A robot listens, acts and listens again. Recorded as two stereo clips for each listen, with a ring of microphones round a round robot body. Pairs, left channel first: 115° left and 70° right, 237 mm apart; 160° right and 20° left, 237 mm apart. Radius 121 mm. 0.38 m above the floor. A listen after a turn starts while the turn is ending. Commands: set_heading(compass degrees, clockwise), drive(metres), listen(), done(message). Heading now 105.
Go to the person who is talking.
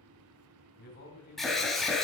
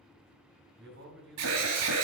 set_heading(40)
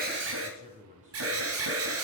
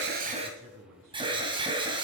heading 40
drive(1.0)
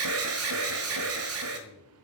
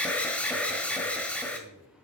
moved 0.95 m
listen()
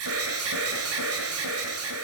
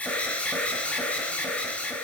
listen()
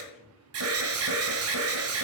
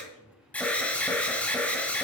done("I heard a man speaking from this way, but can't make it out now. I did not reach it.")